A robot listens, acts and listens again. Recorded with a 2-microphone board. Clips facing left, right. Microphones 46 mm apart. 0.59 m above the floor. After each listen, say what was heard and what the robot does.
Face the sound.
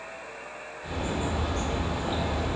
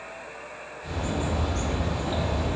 The bird: about 15° left or 165° left. Turn 15° left.
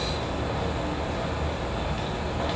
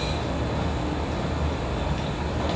Found it: a bird, straight ahead.